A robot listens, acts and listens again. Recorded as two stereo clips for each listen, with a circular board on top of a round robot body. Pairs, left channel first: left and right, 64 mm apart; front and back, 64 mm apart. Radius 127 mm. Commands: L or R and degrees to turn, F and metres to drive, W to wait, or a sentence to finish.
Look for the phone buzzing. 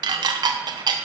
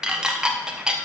W
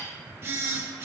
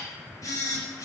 R35
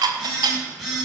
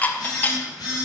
Found it: a phone buzzing, straight ahead, 2 to 4 m away.